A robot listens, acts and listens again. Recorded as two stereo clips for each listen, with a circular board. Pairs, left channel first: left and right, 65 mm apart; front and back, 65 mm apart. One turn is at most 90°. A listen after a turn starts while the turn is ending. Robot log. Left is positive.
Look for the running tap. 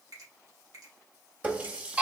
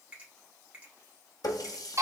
note: The running tap: 20° right.
cmd yaw -20
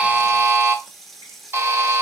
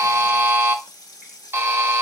end: Found it: a running tap, straight ahead, under 1 m away.